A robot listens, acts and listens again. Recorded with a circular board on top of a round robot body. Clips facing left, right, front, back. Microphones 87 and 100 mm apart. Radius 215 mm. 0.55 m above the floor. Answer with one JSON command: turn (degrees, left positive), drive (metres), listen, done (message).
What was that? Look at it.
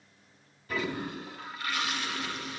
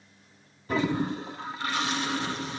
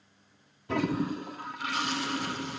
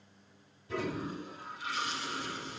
{"turn": -30}
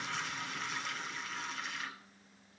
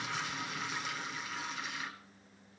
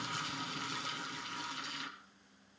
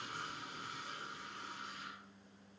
{"done": "Found it: a toilet flushing, straight ahead."}